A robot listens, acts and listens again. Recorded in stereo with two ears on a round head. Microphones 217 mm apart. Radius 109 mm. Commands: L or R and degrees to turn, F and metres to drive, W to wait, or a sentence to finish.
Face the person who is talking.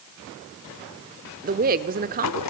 R35
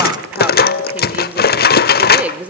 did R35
Found it: a woman speaking, straight ahead, 1 to 2 m away.